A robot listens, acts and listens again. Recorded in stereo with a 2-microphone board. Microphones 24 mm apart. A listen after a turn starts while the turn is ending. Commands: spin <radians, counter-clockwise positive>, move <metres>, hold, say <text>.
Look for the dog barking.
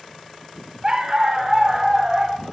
spin -0.26
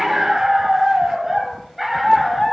spin 0.52
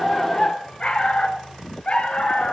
spin 2.27
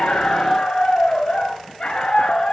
spin 0.52
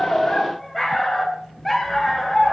say Facing the dog barking, 2 to 4 m away.